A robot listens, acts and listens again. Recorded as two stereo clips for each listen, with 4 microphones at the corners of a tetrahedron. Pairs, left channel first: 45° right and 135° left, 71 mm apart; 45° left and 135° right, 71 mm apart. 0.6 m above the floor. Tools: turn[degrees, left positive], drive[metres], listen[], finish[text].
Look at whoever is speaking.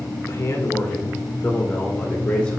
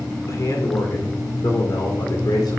Thought: The man speaking: 30° left.
Action: turn[30]
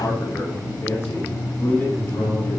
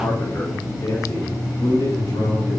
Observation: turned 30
Thought: The man speaking is now 15° left.
Action: turn[15]
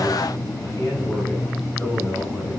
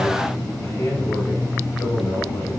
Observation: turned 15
Thought: The man speaking is now 10° left.
Action: turn[10]
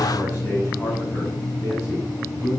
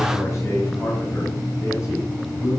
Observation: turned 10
Action: finish[Found it: a man speaking, straight ahead, 2 to 4 m away.]